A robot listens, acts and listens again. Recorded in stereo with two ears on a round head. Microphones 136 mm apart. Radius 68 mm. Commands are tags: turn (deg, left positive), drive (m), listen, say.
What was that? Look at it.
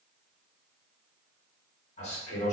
<turn deg="45"/>
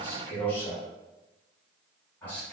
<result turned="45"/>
<turn deg="15"/>
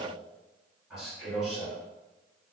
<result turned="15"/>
<say>Found it: a man speaking, straight ahead.</say>